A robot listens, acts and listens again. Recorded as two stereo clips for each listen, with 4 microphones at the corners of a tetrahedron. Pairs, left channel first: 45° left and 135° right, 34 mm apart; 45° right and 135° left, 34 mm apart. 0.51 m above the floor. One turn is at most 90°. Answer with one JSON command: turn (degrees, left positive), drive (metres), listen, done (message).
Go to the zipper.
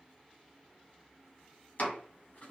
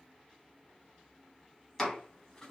{"listen": true}
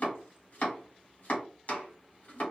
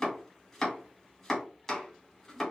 {"listen": true}
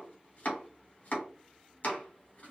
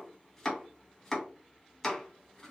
{"done": "I can't make out a zipper, only chopping."}